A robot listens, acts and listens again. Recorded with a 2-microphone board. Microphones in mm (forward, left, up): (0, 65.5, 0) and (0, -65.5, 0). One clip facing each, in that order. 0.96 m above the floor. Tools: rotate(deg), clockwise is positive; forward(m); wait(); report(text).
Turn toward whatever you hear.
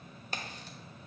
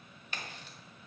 rotate(-40)
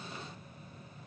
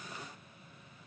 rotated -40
wait()
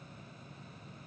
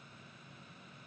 report("I heard a crack, but can't make it out now. It was about straight ahead or 100° left.")